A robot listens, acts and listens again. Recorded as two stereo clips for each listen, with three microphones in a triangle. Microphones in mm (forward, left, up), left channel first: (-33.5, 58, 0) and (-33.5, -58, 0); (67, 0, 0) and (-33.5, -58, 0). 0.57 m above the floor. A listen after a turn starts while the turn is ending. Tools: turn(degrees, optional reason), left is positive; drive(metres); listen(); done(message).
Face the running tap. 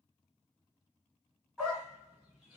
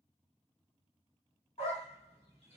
listen()
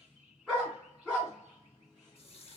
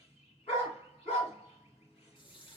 turn(degrees=70, reason="The running tap: 70° left.")
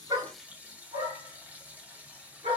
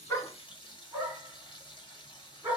turn(degrees=-15, reason="The running tap is now 15° right.")
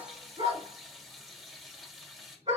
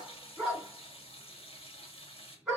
done("Found it: a running tap, straight ahead.")